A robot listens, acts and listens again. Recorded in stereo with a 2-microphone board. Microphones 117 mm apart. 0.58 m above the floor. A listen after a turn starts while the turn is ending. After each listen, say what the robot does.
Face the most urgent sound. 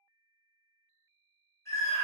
Turn 25° left.
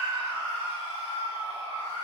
Turn 130° left.
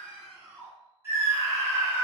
Turn 25° right.
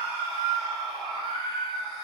Found it: a scream, straight ahead, 1 to 2 m away.